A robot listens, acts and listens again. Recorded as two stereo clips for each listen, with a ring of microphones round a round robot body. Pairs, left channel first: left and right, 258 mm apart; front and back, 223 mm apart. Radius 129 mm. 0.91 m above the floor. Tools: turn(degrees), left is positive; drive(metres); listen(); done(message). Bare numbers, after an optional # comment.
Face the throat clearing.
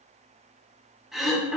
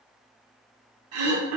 # The throat clearing: straight behind.
turn(180)
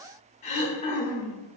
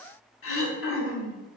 # The throat clearing is now 25° left.
turn(25)
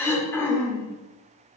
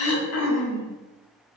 # The throat clearing is now 10° left.
turn(10)
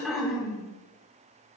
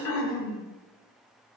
done("Facing the throat clearing, under 1 m away.")